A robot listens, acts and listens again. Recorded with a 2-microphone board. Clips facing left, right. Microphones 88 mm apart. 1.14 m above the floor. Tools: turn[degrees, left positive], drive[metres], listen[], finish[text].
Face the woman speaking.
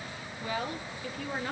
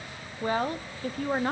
Thought: The woman speaking: about 45° right or 135° right.
Action: turn[-45]
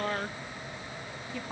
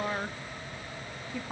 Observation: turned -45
Action: finish[Found it: a woman speaking, straight ahead.]